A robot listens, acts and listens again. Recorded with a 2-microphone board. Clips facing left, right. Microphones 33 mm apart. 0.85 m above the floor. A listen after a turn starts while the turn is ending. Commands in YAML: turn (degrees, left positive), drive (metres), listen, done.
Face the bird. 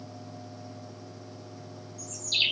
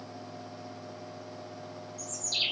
turn: 50
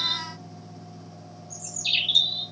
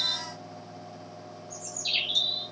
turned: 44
turn: 80
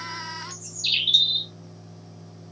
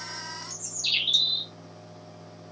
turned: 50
turn: 30
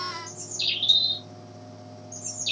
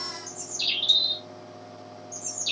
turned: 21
turn: 10
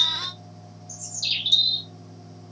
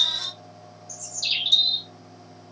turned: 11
done: "Found it: a bird, straight ahead."